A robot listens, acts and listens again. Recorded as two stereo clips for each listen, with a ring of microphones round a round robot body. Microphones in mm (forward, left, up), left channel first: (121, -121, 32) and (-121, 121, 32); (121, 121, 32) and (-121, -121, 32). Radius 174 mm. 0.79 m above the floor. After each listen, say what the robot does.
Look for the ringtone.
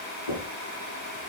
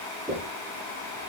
Keep listening.
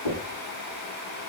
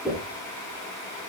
Keep listening.
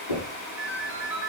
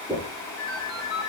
Turn 50° left.
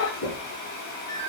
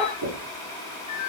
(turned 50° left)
Found it: a ringtone, straight ahead, over 4 m away.